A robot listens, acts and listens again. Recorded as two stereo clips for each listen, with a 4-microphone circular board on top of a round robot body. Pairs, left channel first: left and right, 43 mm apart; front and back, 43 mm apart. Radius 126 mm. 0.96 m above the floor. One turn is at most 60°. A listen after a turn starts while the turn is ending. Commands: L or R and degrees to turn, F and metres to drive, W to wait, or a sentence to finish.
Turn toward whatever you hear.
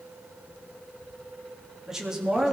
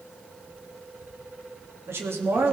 R60
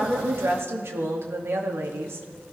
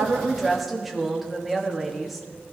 R60
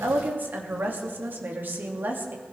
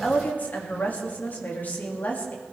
R50
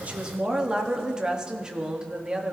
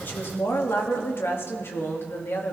R20
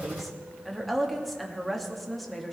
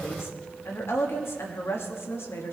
Facing the woman speaking.